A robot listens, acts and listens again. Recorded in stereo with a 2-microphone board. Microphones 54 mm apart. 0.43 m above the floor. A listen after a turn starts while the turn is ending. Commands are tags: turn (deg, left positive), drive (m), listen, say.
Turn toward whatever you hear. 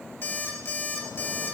<turn deg="50"/>
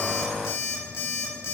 <turn deg="80"/>
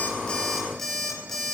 <say>Found it: an alarm clock, straight ahead.</say>